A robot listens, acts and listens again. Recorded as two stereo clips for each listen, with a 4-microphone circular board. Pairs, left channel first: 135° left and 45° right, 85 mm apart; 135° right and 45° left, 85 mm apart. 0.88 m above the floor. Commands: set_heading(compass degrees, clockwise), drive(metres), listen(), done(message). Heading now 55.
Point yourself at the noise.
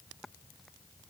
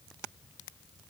listen()
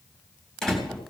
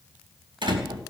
set_heading(0)
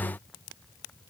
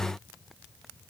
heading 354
set_heading(4)
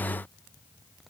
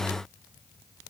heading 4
done("I heard a door slam from this way, but can't make it out now.")